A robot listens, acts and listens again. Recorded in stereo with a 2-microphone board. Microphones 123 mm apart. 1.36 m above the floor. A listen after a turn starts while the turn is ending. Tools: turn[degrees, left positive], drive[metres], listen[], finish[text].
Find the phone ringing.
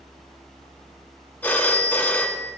Action: turn[30]
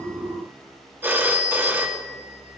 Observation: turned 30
Thought: So it is at 20° right.
Action: turn[-20]
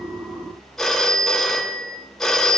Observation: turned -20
Action: finish[Facing the phone ringing.]